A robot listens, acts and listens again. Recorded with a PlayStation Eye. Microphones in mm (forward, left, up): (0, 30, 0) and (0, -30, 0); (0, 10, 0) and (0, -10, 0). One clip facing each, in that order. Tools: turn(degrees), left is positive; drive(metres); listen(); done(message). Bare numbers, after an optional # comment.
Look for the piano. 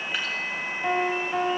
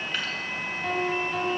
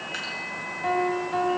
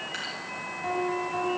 # The piano: about 30° left or 150° left.
turn(30)
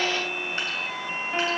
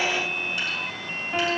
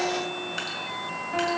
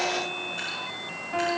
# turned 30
done("Facing the piano, 2 to 4 m away.")